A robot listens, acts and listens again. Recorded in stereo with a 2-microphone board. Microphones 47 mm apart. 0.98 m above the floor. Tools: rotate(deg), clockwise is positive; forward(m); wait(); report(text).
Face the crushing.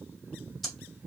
wait()
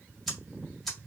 wait()
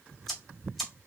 report("I can't make out crushing, only ticking.")